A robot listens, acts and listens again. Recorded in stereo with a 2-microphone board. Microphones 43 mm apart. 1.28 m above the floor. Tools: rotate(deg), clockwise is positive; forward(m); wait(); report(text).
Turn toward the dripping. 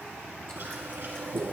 wait()
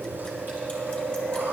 wait()
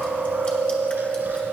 report("I can't make out dripping to turn to.")